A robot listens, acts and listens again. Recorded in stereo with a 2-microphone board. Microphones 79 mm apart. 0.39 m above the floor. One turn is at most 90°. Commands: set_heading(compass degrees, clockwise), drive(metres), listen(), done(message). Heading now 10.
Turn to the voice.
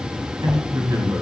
set_heading(60)
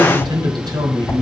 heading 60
set_heading(140)
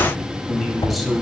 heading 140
done("Found it: a man speaking, straight ahead, 2 to 4 m away.")